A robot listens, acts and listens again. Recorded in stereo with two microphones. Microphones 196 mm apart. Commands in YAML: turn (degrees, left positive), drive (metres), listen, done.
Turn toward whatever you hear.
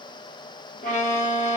turn: 40
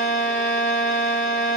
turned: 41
turn: 100
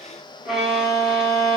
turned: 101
done: "Facing the violin."